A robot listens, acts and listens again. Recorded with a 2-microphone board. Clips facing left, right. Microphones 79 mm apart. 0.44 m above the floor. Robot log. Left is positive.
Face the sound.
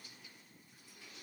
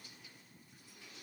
cmd idle
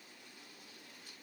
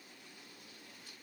cmd idle
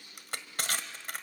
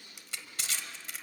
note: The crushing: about 55° left or 125° left.
cmd yaw +55
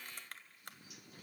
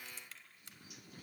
cmd idle
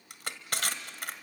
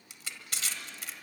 note: So it is at 65° left.
cmd yaw +65
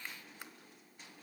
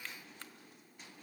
cmd idle
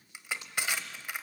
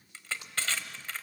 note: The crushing is now 15° left.
cmd yaw +15
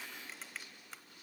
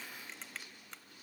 cmd idle
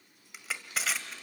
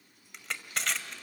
end: Facing the crushing.